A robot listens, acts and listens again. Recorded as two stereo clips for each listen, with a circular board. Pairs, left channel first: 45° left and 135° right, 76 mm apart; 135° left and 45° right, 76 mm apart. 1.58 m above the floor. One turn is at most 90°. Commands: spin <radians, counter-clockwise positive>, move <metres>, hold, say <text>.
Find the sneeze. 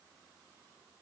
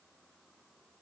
hold
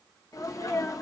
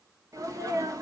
say Facing the sneeze, 1 to 2 m away.